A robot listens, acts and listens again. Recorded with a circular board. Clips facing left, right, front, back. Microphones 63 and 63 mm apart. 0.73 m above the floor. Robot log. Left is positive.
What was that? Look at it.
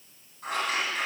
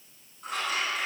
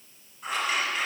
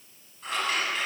note: The scissors: 80° left.
cmd yaw +80
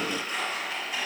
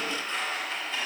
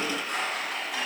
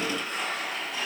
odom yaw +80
note: The scissors is now 15° left.
cmd yaw +15
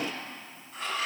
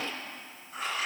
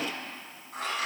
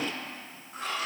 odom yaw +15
end: Found it: scissors, straight ahead.